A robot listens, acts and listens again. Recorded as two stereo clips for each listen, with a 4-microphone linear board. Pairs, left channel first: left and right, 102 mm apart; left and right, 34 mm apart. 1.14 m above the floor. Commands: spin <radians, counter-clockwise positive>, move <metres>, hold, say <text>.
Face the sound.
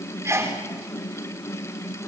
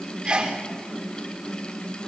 spin -0.52
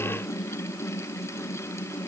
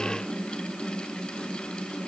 hold
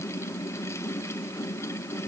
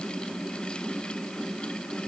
say I heard a sneeze, but can't make it out now. It was about straight ahead or 120° right.